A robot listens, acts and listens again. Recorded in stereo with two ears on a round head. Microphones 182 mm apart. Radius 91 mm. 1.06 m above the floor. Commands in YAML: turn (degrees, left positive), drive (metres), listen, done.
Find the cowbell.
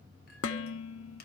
listen: true
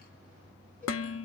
listen: true
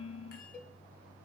turn: 30
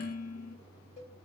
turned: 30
turn: 145
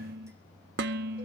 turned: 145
listen: true
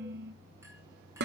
listen: true
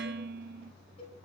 turn: 30
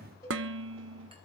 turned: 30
turn: 15
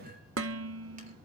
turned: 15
listen: true
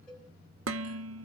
done: "Found it: a cowbell, straight ahead, over 4 m away."